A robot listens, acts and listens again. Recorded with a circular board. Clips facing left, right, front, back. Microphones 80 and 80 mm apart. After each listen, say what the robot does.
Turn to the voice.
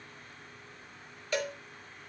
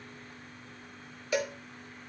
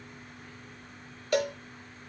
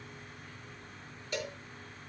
Keep listening.
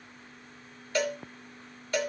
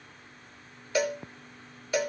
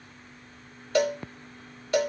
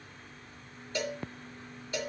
Keep listening.
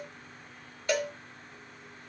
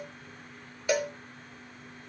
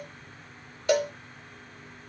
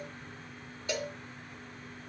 I can't make out anyone speaking, only a cowbell.